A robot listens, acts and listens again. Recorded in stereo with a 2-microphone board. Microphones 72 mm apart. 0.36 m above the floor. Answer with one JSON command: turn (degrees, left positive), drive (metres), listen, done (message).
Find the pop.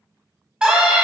{"listen": true}
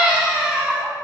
{"listen": true}
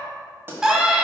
{"turn": -30}
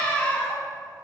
{"listen": true}
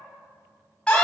{"done": "I heard a pop, but can't make it out now. It was about straight ahead or 120° right."}